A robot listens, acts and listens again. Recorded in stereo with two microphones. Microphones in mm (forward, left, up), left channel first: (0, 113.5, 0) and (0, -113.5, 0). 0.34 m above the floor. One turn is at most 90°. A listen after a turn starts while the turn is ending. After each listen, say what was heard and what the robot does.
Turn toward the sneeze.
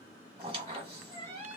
Keep listening.
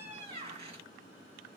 Keep listening.
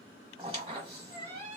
I can't make out a sneeze, only a squeak.